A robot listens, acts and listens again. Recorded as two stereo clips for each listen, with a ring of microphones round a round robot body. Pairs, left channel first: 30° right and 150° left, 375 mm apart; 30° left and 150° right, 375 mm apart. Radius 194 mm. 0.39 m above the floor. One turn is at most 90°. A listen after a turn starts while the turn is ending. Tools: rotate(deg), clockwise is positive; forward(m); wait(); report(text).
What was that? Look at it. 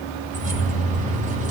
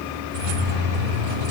rotate(90)
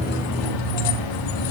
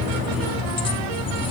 rotate(45)
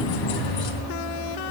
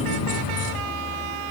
report("Facing the keys jangling.")